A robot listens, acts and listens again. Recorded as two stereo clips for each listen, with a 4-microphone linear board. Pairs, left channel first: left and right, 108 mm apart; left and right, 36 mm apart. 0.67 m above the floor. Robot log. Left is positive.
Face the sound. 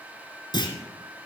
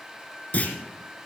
note: The clunk: about 45° left or 135° left.
cmd yaw +45
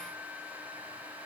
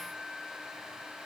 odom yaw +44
cmd idle
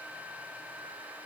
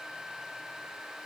end: I heard a clunk, but can't make it out now. It was about straight ahead or 90° left.